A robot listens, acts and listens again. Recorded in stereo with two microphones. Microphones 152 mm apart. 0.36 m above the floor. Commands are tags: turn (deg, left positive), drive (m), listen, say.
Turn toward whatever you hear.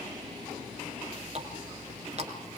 <turn deg="-50"/>
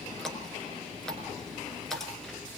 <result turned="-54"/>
<say>Found it: a running tap, straight ahead, 2 to 4 m away.</say>